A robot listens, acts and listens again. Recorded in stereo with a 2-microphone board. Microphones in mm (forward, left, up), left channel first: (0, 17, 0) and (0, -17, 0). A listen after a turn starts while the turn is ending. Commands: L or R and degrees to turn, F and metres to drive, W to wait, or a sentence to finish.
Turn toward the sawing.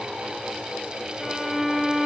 W
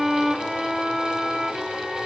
W
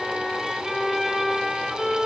I can't make out sawing to turn to.